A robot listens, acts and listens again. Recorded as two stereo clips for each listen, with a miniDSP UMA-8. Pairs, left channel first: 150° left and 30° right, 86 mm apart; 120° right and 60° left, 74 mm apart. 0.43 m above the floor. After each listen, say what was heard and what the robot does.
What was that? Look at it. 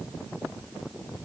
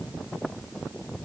Keep listening.
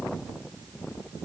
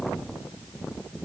Keep listening.
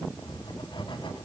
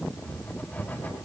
The writing: 175° left. Turn 175° left.
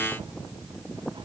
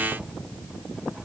Keep listening.
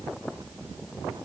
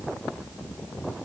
Keep listening.
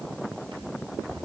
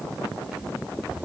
The writing is now 15° right. Turn 15° right.
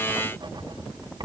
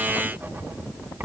Found it: writing, straight ahead.